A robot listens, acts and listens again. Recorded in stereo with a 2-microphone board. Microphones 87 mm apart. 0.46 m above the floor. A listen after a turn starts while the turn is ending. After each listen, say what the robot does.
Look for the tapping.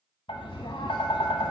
Turn 90° left.
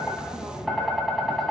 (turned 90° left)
Found it: tapping, straight ahead.